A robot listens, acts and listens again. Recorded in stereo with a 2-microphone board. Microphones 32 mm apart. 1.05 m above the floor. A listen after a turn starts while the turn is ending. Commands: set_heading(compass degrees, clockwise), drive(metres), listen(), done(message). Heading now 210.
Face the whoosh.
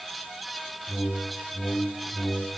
set_heading(120)
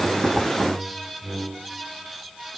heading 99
set_heading(119)
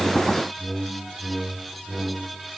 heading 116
done("Facing the whoosh, under 1 m away.")